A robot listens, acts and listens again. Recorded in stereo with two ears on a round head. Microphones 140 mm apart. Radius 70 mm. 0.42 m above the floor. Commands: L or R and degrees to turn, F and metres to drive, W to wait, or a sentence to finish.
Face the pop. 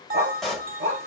L30
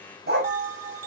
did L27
W
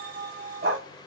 I heard a pop, but can't make it out now. It was about 25° right or 150° left.